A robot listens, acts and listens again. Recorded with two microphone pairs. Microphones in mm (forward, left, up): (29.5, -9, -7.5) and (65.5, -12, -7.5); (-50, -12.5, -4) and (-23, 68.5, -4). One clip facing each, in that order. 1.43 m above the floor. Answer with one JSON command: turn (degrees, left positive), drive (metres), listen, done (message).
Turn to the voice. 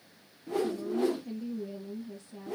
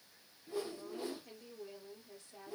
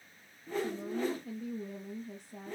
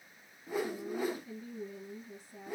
{"turn": -80}
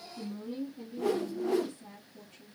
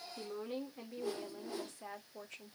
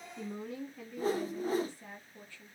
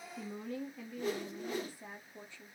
{"done": "Found it: a woman speaking, straight ahead, 1 to 2 m away."}